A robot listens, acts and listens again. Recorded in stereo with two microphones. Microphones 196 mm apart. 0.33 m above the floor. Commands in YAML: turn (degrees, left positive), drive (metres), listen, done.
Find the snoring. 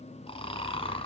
turn: 30
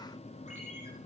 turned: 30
listen: true
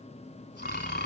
turn: 120
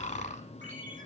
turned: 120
turn: 40
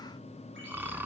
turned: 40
turn: -10
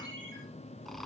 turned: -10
done: "Facing the snoring."